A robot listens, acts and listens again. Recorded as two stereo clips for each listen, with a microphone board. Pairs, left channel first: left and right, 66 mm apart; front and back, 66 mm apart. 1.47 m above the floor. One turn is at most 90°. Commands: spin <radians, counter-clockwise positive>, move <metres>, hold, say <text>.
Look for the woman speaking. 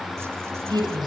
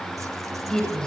spin -1.40
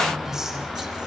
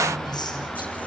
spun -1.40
hold
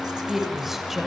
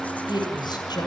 say Facing the woman speaking, over 4 m away.